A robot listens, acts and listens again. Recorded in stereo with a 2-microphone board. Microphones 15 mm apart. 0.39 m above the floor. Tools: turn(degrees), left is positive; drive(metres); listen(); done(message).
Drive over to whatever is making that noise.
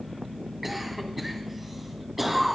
turn(degrees=-30)
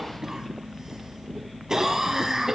turn(degrees=-140)
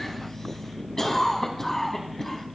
turn(degrees=30)
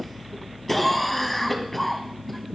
turn(degrees=10)
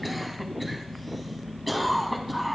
drive(metres=1.0)
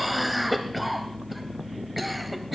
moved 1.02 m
drive(metres=1.0)
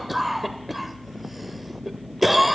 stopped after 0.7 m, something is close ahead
turn(degrees=-10)
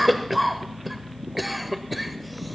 done("I am next to the cough.")